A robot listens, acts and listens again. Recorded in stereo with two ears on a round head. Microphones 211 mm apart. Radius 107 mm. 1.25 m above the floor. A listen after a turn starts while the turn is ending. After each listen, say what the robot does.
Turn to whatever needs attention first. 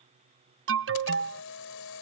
Turn 60° right.
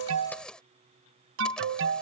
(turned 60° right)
Turn 55° right.
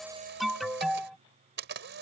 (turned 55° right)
Facing the alarm.